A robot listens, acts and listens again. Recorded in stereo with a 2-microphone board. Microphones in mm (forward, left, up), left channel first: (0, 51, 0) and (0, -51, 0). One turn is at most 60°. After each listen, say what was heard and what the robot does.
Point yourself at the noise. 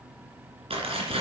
The tearing paper: about 75° right or 105° right. Turn 60° right.
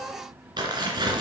So it is at 45° right. Turn 45° right.
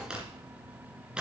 The tearing paper is now 10° right. Turn 10° right.
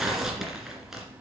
Found it: tearing paper, straight ahead, 2 to 4 m away.